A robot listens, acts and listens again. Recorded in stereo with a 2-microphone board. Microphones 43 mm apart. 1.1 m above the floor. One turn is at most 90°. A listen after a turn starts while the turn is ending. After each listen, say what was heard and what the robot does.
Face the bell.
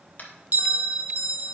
The bell: about 40° right or 140° right. Turn 40° right.
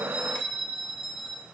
Facing the bell, under 1 m away.